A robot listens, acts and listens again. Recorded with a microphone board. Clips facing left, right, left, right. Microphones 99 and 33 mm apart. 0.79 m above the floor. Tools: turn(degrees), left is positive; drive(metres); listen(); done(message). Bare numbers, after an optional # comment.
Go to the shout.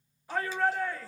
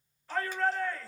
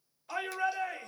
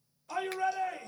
turn(30)
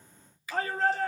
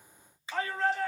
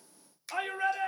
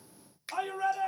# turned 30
# So it is at 135° left.
turn(135)
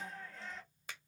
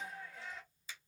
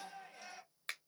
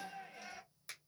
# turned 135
# The shout is now 10° right.
turn(-10)
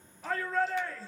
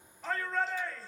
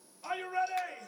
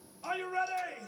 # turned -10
drive(1.0)
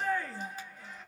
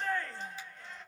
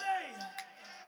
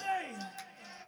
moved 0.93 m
# The shout is now 10° left.
turn(10)
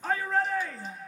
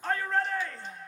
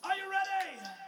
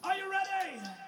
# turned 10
drive(1.0)
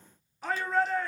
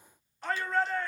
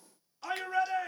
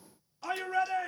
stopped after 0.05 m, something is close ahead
done("I am next to the shout.")